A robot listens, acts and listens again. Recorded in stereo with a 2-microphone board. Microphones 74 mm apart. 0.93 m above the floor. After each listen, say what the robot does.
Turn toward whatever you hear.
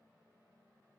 Keep listening.
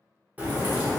Turn 20° right.
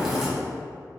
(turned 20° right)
Found it: a crack, straight ahead, 1 to 2 m away.